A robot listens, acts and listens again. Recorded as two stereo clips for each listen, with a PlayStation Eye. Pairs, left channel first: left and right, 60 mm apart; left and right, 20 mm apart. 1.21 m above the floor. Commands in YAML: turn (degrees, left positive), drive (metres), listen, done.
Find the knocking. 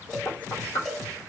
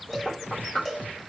turn: 65
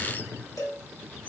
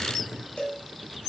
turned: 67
listen: true
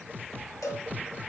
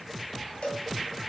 listen: true
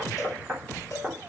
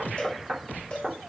done: "Facing the knocking."